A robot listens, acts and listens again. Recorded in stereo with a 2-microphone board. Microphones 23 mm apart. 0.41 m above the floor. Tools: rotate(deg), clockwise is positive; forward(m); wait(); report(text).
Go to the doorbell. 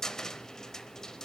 wait()
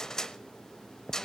wait()
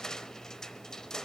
report("I can't make out a doorbell to turn to.")